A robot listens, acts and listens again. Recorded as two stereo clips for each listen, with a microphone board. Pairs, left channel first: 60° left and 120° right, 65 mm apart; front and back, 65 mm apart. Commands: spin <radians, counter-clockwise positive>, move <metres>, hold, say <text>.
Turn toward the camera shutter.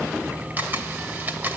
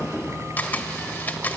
spin -1.05
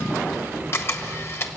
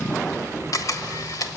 spin 0.26
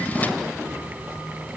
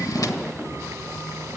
hold
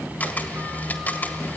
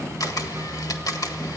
say Found it: a camera shutter, straight ahead, 1 to 2 m away.